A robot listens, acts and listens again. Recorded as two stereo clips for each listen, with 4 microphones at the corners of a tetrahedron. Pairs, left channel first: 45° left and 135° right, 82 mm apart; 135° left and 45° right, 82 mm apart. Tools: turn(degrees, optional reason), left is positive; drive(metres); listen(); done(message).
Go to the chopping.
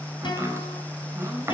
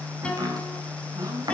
turn(degrees=-80, reason="The chopping: 80° right.")
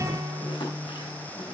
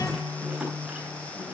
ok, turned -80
listen()
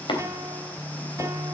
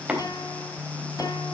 turn(degrees=35, reason="The chopping is now 35° left.")
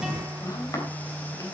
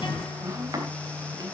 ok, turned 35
drive(metres=1.0)
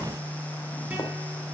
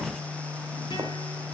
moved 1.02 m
listen()
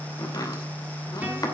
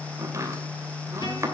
drive(metres=1.0)
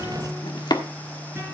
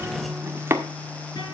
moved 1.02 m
turn(degrees=15, reason="The chopping is now 15° left.")
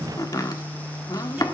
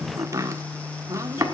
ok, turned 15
drive(metres=1.0)
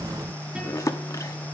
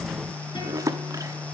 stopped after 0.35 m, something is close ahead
done("I am next to the chopping.")